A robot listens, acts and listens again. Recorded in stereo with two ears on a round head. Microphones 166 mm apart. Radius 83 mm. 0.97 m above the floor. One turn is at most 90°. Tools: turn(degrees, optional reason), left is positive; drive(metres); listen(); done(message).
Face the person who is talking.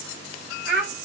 turn(degrees=-65, reason="The child speaking: about 65° right or 115° right.")
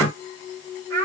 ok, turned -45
turn(degrees=-65, reason="So it is at 65° right.")
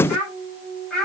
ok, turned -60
done("Facing the child speaking, 2 to 4 m away.")